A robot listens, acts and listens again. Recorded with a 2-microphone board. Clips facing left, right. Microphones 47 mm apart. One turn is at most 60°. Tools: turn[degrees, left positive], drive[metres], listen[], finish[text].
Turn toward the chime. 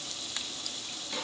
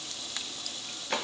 Action: listen[]
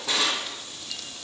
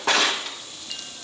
Action: listen[]
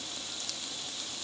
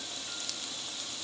Action: finish[I can't make out a chime, only a drawer.]